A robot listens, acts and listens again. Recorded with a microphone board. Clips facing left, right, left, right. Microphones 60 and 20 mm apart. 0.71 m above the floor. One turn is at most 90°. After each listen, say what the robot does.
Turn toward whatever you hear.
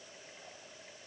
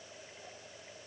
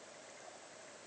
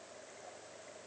Keep listening.
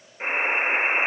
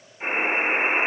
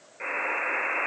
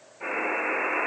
Turn 70° left.
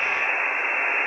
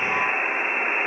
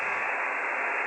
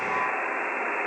Turn 30° left.
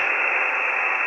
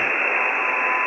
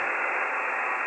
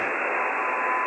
Turn 10° right.
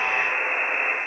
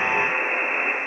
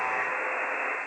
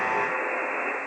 Facing the buzzer, 2 to 4 m away.